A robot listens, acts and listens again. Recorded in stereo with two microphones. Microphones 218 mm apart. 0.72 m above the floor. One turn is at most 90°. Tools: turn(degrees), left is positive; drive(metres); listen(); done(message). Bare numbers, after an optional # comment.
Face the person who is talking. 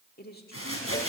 # The woman speaking: about 45° left or 135° left.
turn(45)
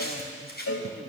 listen()
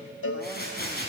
listen()
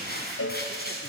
done("I heard a woman speaking, but can't make it out now. It was about straight ahead or 90° left.")